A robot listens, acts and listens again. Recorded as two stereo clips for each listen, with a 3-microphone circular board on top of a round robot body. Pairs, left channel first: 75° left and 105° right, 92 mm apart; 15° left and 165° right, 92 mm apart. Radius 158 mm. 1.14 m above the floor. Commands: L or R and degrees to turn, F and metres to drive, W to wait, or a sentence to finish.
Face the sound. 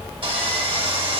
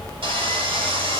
R140
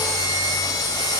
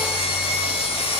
L20
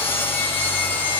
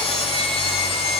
Facing the sawing, 1 to 2 m away.